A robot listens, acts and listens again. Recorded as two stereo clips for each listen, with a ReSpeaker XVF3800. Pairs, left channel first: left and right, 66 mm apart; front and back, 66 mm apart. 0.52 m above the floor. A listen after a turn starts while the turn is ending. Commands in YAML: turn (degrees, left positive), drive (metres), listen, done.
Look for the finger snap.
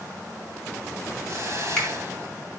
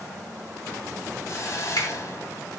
turn: 10
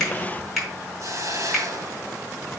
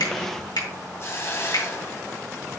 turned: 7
done: "Found it: a finger snap, straight ahead."